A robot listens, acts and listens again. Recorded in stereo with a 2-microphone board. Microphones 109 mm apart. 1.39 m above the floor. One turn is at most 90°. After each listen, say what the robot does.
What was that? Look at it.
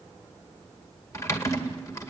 Turn 30° left.
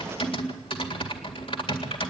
Turn 90° left.
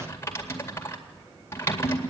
Turn 25° left.
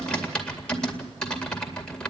Turn 10° left.
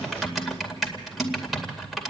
Facing the typing on a keyboard, 2 to 4 m away.